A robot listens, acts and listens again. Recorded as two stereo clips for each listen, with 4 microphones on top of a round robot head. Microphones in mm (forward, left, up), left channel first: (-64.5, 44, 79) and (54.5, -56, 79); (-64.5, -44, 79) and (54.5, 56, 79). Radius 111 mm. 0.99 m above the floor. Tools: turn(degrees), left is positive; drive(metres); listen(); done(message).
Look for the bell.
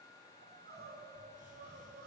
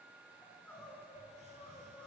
listen()
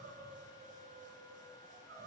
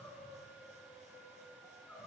listen()
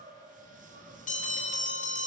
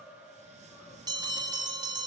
turn(degrees=105)
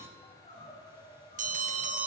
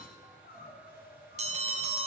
done("Found it: a bell, straight ahead, 2 to 4 m away.")